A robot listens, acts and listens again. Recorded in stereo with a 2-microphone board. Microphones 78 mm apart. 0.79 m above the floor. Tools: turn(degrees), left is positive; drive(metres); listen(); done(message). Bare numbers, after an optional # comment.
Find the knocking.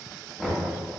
turn(-30)
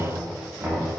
# So it is at 150° right.
turn(-150)
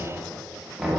done("Found it: knocking, straight ahead.")